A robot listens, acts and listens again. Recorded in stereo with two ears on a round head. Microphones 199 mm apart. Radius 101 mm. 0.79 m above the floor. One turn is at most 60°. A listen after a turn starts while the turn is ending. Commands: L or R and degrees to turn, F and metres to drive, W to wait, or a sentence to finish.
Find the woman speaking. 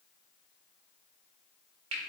W
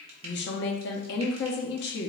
L50
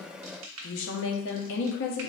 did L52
L60
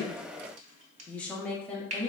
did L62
Found it: a woman speaking, straight ahead.